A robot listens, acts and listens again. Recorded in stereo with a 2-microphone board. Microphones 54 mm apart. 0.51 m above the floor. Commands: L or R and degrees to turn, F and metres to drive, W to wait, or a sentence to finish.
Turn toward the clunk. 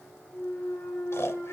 L30
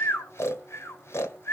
W
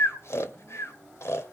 I heard a clunk, but can't make it out now. It was about straight ahead or 120° left.